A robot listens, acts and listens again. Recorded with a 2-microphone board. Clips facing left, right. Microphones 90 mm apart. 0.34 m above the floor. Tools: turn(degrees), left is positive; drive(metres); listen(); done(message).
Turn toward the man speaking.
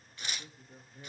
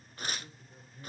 turn(degrees=60)
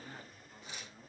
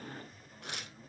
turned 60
done("Found it: a man speaking, straight ahead.")